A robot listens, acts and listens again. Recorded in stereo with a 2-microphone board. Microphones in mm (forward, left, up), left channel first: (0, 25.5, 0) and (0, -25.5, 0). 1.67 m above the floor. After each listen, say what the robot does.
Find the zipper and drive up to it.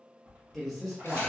Turn 30° right.
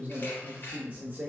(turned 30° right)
Keep listening.
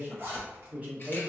Turn 115° right.
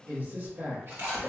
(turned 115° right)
Drive 1.0 m forward.
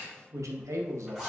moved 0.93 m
Drive 1.0 m forward.
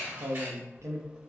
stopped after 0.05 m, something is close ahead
Keep listening.
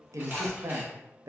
Keep listening.
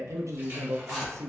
Arrived at the zipper, straight ahead.